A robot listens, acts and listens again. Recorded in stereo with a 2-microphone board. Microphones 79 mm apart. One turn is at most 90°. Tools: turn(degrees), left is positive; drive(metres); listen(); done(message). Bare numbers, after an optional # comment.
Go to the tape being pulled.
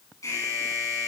listen()
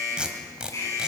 turn(-30)
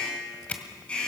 # So it is at 20° left.
turn(20)
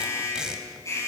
# The tape being pulled is now 10° right.
turn(-10)
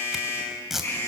drive(1.0)
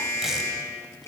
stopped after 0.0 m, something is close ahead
listen()
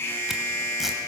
listen()
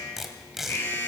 done("Something is in my way. I am facing the tape being pulled but have not reached it.")